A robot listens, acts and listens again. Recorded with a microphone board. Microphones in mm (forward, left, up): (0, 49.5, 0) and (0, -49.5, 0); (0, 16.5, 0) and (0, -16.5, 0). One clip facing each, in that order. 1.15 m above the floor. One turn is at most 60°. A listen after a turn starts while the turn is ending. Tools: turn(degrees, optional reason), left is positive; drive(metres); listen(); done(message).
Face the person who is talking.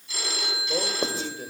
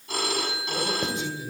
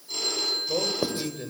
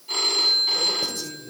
turn(degrees=55, reason="The man speaking: about 55° left or 125° left.")
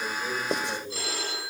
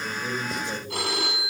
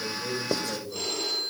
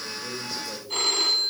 done("Found it: a man speaking, straight ahead, over 4 m away.")